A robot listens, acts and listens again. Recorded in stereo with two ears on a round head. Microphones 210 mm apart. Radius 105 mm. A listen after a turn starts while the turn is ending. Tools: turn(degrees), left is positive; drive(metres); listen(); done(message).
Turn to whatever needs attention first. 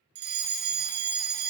turn(degrees=-45)
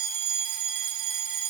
turn(degrees=-80)
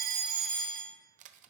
done("Found it: a fire alarm, straight ahead, 1 to 2 m away.")